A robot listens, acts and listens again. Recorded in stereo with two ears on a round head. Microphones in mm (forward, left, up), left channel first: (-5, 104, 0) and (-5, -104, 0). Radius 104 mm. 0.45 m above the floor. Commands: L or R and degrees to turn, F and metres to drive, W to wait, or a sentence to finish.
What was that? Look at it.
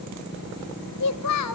L70
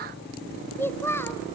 L10
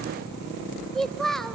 Facing the child speaking, under 1 m away.